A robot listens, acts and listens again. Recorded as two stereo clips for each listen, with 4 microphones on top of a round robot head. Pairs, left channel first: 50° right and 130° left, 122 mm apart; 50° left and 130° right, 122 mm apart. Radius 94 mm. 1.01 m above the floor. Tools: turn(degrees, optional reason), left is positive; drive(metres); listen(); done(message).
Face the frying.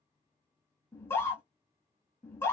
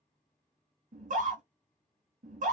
listen()
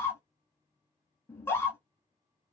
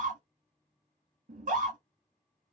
listen()
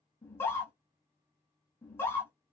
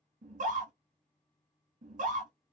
done("I can't make out frying, only a scream.")